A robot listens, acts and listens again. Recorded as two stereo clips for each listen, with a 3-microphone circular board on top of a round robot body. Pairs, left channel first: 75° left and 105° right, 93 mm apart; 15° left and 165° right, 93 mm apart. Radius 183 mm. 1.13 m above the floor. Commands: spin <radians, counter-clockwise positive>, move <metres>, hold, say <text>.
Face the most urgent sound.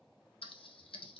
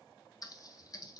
hold
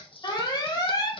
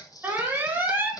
spin 2.18
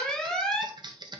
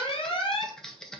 spin -0.17
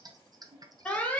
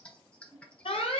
say Facing the alarm.